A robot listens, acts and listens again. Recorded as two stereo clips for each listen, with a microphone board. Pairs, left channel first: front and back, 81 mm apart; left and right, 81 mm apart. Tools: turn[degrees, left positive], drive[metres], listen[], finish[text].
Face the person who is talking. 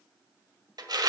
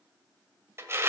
Action: listen[]
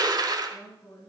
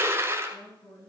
Thought: The woman speaking: 60° left.
Action: turn[60]
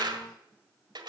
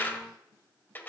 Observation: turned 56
Action: listen[]
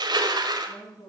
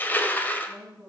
Action: finish[Found it: a woman speaking, straight ahead.]